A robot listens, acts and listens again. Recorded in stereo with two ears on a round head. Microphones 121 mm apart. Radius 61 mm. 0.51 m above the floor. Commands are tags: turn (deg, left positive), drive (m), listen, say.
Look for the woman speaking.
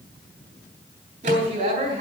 <turn deg="-60"/>
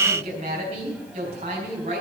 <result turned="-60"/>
<turn deg="-55"/>
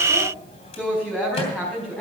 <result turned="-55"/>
<turn deg="10"/>
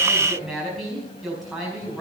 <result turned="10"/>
<say>Facing the woman speaking, over 4 m away.</say>